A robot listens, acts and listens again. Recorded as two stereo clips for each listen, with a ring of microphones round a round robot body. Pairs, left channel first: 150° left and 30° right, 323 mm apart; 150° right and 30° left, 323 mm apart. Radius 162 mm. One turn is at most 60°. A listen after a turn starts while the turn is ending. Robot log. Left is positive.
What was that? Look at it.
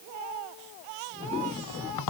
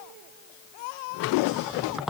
note: The squeak: 120° left.
cmd yaw +60
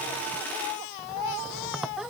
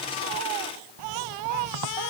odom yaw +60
note: The squeak is now 60° left.
cmd yaw +60
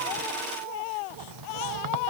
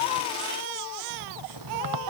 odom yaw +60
cmd idle
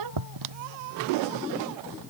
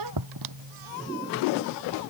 end: Facing the squeak.